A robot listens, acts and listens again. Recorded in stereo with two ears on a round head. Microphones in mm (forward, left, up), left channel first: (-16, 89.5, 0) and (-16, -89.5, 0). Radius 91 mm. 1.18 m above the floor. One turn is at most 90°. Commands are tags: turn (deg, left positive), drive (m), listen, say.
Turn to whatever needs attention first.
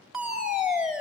<turn deg="-30"/>
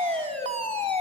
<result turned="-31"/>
<turn deg="-90"/>
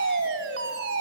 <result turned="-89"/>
<turn deg="-55"/>
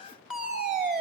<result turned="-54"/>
<say>Found it: a fire alarm, straight ahead, over 4 m away.</say>